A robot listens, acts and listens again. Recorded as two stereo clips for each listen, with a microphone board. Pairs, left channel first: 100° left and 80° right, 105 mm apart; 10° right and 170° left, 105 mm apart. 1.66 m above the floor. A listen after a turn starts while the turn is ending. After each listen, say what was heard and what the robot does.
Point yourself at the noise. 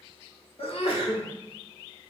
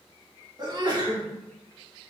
The sneeze: 125° left. Turn 125° left.
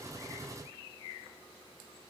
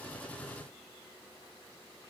I heard a sneeze from this way, but can't make it out now.